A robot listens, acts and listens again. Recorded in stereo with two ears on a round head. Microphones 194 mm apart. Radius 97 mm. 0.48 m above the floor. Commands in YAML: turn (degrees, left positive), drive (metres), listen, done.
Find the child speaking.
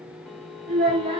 turn: -30
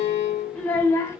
turn: 15
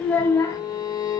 turn: 15
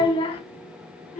turn: 35
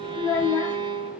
turn: 20
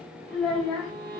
done: "Facing the child speaking."